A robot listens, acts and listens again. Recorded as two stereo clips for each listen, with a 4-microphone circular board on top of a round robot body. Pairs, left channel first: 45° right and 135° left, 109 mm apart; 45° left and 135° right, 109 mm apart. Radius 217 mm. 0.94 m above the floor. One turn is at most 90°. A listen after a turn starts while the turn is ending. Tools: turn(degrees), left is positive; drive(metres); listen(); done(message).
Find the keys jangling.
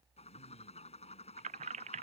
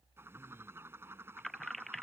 turn(degrees=90)
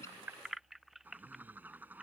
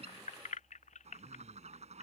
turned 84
turn(degrees=50)
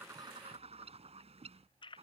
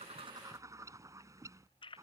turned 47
done("Found it: keys jangling, straight ahead.")